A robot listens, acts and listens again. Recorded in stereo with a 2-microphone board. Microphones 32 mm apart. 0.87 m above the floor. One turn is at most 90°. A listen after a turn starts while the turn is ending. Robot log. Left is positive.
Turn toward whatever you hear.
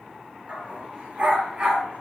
note: The dog barking: about 35° right or 145° right.
cmd yaw -35
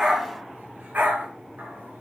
note: So it is at 115° right.
cmd yaw -90
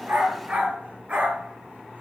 note: The dog barking is now 35° right.
cmd yaw -35
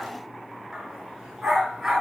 note: The dog barking is now 10° right.
cmd yaw -10
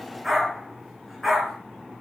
end: Found it: a dog barking, straight ahead, over 4 m away.